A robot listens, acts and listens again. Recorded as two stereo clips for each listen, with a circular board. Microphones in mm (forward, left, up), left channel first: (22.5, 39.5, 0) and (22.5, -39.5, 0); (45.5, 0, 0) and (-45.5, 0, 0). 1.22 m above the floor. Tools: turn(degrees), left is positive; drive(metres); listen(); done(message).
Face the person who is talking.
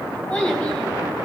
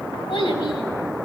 turn(degrees=10)
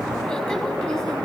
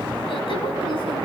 listen()
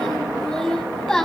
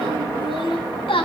done("Facing the child speaking, over 4 m away.")